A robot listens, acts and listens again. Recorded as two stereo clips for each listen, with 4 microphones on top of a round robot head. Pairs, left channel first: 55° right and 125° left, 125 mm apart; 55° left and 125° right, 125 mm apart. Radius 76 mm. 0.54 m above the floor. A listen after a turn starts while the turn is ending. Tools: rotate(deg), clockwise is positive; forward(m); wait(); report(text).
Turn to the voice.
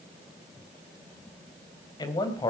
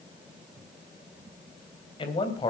report("Found it: a man speaking, straight ahead.")